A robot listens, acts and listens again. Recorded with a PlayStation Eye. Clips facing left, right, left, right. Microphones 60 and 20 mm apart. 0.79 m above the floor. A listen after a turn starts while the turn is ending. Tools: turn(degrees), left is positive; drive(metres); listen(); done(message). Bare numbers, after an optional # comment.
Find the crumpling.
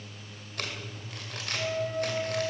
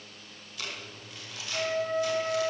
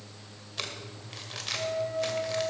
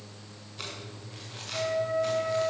# The crumpling: about 60° left or 120° left.
turn(60)
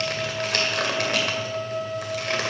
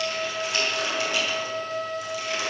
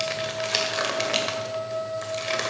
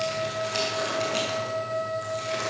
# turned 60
# So it is at 60° left.
turn(60)
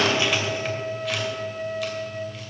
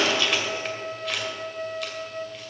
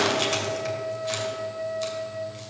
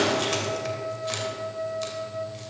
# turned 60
done("Facing the crumpling, 2 to 4 m away.")